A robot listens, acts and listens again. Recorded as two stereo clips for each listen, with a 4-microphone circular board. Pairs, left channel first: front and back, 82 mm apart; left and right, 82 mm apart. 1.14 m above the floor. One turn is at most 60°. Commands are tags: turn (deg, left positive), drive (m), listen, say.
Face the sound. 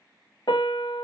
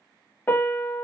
<turn deg="25"/>
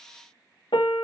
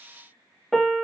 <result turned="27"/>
<say>Facing the piano.</say>